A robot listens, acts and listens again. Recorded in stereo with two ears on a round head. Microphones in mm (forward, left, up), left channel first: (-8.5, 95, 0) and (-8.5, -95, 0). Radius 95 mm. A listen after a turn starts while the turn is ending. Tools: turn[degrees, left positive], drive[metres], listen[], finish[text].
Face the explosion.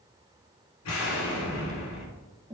Thought: The explosion: about 70° left or 110° left.
Action: turn[70]
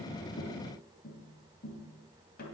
Action: listen[]
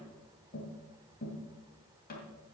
Action: finish[I heard an explosion, but can't make it out now. It was about straight ahead or 40° left.]